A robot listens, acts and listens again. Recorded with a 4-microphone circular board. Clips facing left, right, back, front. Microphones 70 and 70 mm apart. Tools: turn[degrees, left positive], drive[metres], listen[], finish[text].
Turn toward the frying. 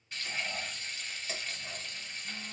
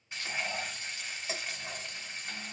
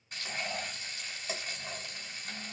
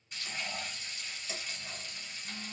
Thought: The frying: 155° right.
Action: turn[-155]
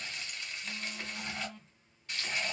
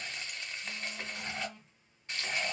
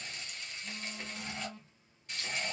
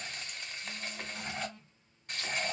Thought: The frying is now 30° right.
Action: turn[-30]
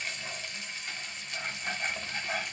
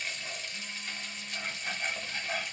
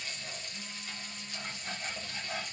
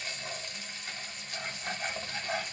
Action: finish[Facing the frying.]